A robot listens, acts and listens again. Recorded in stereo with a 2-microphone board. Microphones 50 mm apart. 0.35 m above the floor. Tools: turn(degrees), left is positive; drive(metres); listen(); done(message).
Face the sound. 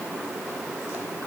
listen()
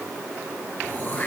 turn(degrees=40)
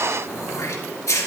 turn(degrees=100)
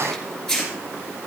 done("Found it: throat clearing, straight ahead, 2 to 4 m away.")